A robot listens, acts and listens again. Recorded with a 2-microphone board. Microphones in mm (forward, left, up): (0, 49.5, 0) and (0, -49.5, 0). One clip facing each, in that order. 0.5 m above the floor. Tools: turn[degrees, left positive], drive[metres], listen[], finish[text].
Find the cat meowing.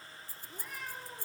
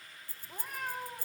Thought: The cat meowing: about 50° right or 130° right.
Action: turn[-50]
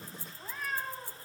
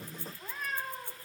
Action: finish[Found it: a cat meowing, straight ahead, 1 to 2 m away.]